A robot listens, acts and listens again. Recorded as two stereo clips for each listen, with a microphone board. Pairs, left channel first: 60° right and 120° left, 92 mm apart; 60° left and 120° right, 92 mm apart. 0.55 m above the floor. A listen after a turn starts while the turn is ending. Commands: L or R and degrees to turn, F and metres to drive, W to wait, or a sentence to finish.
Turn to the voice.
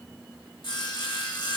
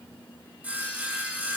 W
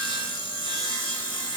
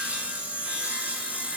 W
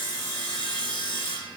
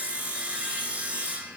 I can't make out anyone speaking, only sawing.